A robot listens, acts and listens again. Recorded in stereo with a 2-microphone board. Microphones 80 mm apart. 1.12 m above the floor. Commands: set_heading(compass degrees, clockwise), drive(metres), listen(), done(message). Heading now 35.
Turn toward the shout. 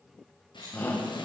set_heading(10)
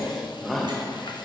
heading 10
done("Found it: a shout, straight ahead.")